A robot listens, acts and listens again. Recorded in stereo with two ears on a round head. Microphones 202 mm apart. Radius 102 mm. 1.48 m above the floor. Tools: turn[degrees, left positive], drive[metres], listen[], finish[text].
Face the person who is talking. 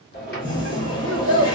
Thought: The child speaking: about 60° left or 120° left.
Action: turn[60]
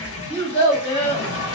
Thought: So it is at 30° left.
Action: turn[30]
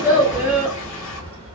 Thought: The child speaking is now 10° right.
Action: turn[-10]
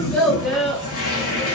Action: finish[Found it: a child speaking, straight ahead, under 1 m away.]